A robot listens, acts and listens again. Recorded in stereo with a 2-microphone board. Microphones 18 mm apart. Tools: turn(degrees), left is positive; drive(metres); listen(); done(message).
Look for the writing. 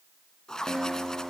turn(degrees=40)
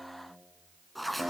done("Found it: writing, straight ahead, 2 to 4 m away.")